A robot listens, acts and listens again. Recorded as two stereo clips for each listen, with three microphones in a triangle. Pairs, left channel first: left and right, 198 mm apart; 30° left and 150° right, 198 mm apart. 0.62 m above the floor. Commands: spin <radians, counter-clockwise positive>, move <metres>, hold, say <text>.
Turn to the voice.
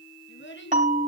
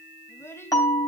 spin 1.83
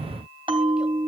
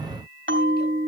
hold
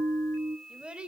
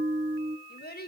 say Facing the child speaking.